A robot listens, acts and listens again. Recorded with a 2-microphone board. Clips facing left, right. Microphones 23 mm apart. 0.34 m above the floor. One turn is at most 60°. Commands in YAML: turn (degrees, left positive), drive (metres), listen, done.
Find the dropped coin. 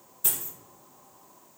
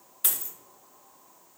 turn: -60
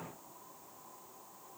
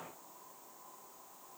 listen: true
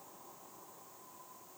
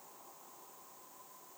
done: "I heard a dropped coin, but can't make it out now. It was about 5° right or 55° right."